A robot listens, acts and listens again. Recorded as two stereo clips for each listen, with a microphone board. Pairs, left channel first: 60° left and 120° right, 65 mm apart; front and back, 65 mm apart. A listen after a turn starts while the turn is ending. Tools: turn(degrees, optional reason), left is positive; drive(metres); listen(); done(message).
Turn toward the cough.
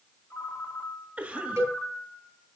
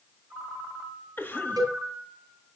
turn(degrees=-55, reason="The cough: 55° right.")
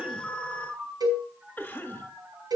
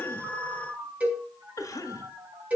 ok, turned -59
done("Facing the cough, 1 to 2 m away.")